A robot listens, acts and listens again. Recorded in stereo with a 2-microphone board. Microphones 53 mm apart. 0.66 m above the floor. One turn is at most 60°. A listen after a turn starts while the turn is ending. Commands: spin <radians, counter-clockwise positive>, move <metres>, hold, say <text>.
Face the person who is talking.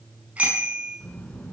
spin 0.52
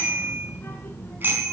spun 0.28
spin 0.87
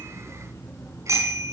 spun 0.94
spin 1.05
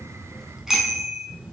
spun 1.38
spin -0.26
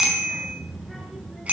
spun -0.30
say Found it: a child speaking, straight ahead, over 4 m away.